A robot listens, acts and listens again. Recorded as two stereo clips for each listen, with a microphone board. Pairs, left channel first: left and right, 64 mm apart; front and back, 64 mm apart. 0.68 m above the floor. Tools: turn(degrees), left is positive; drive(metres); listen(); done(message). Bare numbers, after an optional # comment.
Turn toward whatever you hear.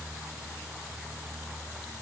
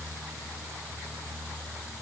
listen()
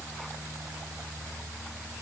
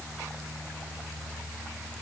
listen()
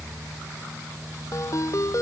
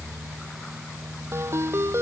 # The ringtone: 130° left.
turn(130)
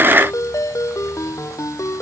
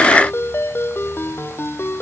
# The ringtone is now 50° left.
turn(50)
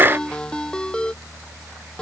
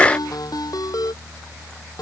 # The ringtone is now 15° left.
turn(15)
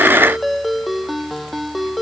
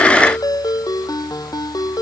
done("Facing the ringtone.")